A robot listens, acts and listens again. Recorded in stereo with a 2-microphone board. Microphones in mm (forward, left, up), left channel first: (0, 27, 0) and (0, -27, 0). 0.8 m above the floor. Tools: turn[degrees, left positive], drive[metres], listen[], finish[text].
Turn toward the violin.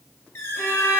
Thought: The violin: about 40° left or 140° left.
Action: turn[40]
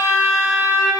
Thought: So it is at 100° left.
Action: turn[100]
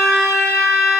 Action: finish[Found it: a violin, straight ahead.]